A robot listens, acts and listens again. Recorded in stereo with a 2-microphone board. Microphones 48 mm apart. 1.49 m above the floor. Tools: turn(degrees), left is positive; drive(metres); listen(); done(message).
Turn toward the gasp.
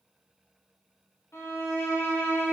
listen()
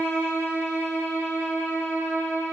listen()
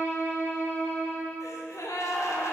turn(degrees=90)
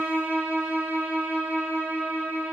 done("Facing where the gasp came from. I can't hear it now.")